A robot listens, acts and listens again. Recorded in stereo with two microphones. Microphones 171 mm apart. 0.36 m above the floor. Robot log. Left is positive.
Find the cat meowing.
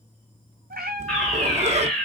note: The cat meowing: about 60° right or 120° right.
cmd yaw -60
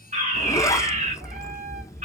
note: So it is at 60° right.
cmd yaw -60
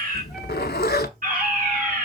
cmd idle
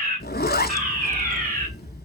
cmd idle
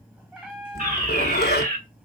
end: Found it: a cat meowing, straight ahead.